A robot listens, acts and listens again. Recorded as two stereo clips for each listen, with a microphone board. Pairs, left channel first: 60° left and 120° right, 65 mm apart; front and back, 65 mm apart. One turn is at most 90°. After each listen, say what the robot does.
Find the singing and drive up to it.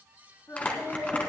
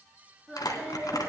Turn 90° left.
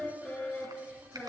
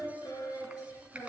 Turn 10° right.
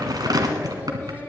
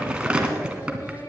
Drive 1.0 m forward.
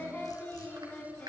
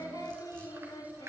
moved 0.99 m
Drive 1.0 m forward.
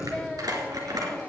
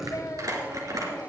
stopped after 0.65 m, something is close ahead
Turn 15° right.
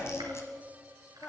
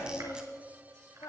I am next to the singing.